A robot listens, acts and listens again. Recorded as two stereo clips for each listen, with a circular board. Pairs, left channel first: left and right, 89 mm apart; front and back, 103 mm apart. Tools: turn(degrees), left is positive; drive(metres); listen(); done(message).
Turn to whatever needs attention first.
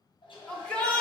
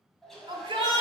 turn(degrees=165)
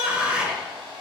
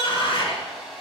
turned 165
turn(degrees=-10)
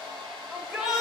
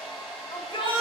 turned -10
done("Facing the shout.")